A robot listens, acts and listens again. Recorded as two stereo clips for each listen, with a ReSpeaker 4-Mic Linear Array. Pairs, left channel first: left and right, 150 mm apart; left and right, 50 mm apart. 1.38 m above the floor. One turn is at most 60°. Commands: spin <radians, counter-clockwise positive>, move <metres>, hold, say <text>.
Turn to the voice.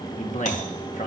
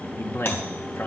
spin 0.96
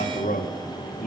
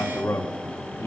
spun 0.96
spin 1.05
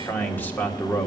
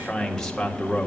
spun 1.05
spin 0.17
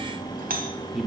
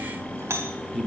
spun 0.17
say Found it: a man speaking, straight ahead, 1 to 2 m away.